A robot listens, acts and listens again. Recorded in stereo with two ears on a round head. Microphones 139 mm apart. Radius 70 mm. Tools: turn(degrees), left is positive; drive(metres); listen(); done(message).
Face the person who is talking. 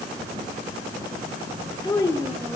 turn(degrees=25)
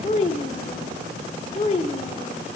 turn(degrees=135)
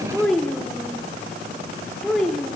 done("Facing the child speaking.")